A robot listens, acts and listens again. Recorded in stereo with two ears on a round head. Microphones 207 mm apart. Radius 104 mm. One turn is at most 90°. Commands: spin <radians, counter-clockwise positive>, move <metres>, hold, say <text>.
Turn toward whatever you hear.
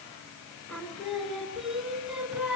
spin -0.52
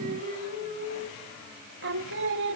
spin -1.57
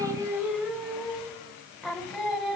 say Facing the singing.